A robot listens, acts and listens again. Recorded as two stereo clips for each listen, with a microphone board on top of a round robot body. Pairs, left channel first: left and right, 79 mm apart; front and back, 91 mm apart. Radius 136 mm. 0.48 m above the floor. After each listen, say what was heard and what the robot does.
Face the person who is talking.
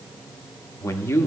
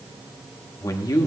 The man speaking: 40° left. Turn 40° left.
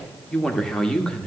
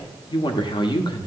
The man speaking is now 10° left. Turn 10° left.
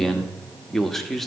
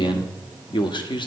Found it: a man speaking, straight ahead, 1 to 2 m away.